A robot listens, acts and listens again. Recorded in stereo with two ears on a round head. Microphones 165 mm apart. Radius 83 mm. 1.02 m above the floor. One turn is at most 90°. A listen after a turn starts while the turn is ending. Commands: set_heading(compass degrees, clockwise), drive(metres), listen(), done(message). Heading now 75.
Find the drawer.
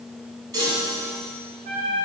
listen()
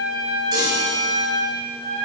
listen()
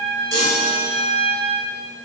done("I can't make out a drawer, only a trumpet and a chime.")